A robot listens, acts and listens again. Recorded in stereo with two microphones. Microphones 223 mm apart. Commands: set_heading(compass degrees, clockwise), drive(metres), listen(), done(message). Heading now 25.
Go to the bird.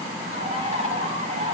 set_heading(55)
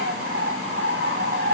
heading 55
set_heading(170)
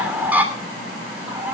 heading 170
set_heading(180)
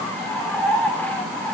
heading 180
drive(1.0)
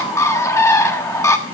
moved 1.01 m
set_heading(165)
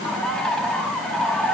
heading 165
drive(1.0)
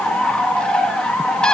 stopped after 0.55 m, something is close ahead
done("Arrived at the bird, straight ahead.")